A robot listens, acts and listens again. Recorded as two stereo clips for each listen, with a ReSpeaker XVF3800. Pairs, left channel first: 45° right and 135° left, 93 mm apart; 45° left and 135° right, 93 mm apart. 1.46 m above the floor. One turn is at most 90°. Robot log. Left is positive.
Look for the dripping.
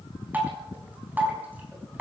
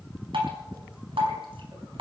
note: The dripping: 155° right.
cmd yaw -90
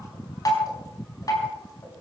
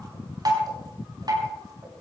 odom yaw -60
note: The dripping is now 95° right.
cmd yaw -90
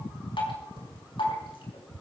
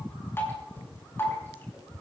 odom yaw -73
note: The dripping is now 20° right.
cmd yaw -20
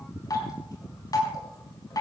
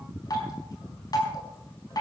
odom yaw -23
end: Found it: dripping, straight ahead, over 4 m away.